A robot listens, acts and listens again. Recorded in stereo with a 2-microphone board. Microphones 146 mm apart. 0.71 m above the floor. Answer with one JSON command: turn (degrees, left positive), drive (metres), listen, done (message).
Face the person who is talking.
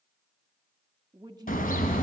{"turn": -25}
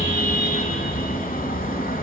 {"listen": true}
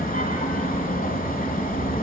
{"listen": true}
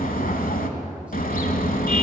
{"done": "I heard a woman speaking, but can't make it out now. It was about straight ahead or 130° right."}